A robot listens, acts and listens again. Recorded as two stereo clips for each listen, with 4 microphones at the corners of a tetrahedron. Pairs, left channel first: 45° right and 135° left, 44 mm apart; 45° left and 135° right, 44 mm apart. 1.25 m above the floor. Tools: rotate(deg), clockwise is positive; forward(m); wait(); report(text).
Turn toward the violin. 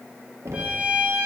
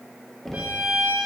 rotate(175)
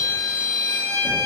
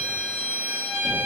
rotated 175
rotate(70)
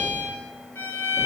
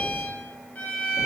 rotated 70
rotate(10)
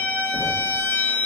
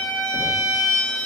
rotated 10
report("Facing the violin.")